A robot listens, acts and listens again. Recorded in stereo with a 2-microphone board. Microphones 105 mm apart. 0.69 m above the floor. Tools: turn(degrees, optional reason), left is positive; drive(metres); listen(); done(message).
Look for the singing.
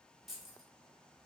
listen()
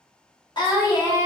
turn(degrees=35, reason="The singing: about 35° left or 145° left.")
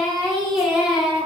turn(degrees=-10, reason="So it is at 10° right.")
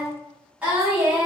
turn(degrees=-20, reason="The singing is now 20° right.")
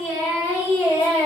turn(degrees=-15, reason="The singing is now 15° right.")
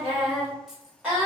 turn(degrees=-10, reason="The singing is now 10° right.")
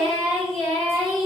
done("Facing the singing.")